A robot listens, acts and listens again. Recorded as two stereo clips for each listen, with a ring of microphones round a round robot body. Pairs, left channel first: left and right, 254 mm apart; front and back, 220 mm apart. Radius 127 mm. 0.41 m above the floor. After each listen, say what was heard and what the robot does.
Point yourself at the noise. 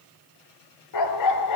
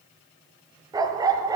The dog barking: 105° left. Turn 105° left.
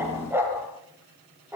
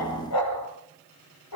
The dog barking is now 10° right. Turn 10° right.
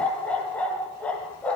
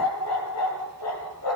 Facing the dog barking.